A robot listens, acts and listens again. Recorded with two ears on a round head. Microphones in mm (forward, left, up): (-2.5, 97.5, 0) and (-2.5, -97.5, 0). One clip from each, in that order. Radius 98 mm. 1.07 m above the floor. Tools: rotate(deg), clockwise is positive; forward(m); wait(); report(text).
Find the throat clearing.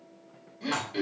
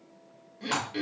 rotate(30)
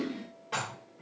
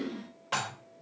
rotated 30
rotate(-25)
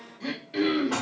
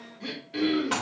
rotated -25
rotate(-10)
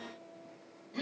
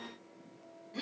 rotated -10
report("Found it: throat clearing, straight ahead.")